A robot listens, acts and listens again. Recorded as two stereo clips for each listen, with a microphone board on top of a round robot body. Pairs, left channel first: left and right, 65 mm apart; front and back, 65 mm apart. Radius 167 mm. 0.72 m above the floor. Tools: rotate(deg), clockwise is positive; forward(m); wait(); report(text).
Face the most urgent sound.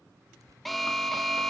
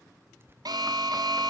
rotate(-180)
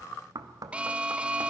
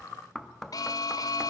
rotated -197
rotate(20)
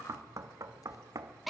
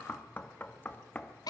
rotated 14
report("Found it: an alarm, straight ahead.")